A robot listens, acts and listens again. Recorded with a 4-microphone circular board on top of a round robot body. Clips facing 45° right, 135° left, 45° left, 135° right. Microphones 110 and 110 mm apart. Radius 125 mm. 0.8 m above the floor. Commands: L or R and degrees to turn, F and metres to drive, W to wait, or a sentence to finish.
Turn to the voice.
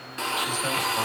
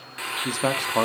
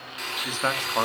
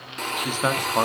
L150
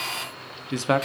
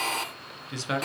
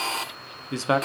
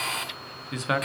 R10
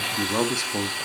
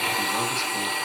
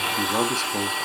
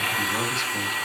W
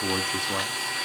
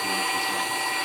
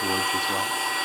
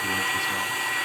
W
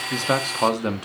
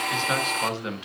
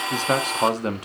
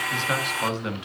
Facing the man speaking, 1 to 2 m away.